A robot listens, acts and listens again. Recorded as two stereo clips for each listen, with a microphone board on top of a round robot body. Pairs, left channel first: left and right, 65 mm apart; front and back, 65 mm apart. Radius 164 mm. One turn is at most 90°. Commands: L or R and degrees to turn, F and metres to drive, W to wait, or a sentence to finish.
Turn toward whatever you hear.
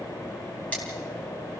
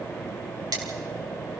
L90
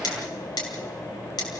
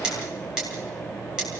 L90
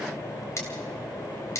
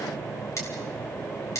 L45
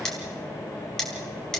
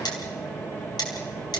L10
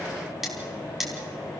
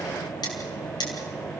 Found it: cutlery clinking, straight ahead.